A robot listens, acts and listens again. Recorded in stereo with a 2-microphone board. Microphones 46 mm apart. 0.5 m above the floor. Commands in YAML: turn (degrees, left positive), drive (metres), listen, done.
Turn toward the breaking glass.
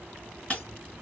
turn: 30
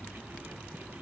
listen: true
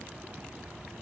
done: "I heard breaking glass, but can't make it out now. It was about straight ahead or 120° left."